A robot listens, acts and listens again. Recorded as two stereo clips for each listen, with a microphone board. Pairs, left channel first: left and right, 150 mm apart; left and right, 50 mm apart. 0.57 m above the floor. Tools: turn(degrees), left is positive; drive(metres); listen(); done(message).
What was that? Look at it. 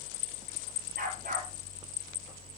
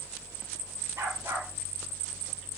turn(degrees=-70)
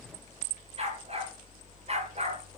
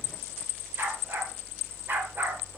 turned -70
turn(degrees=-45)
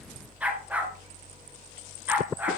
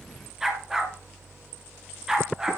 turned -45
turn(degrees=-10)
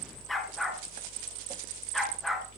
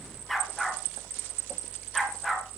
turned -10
done("Facing the dog barking.")